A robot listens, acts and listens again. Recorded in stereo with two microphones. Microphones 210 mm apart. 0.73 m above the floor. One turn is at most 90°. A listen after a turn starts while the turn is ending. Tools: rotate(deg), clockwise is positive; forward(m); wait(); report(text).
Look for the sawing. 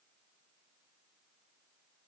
wait()
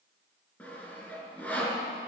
rotate(-30)
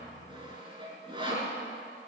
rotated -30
rotate(25)
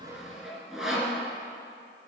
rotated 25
report("Facing the sawing, 2 to 4 m away.")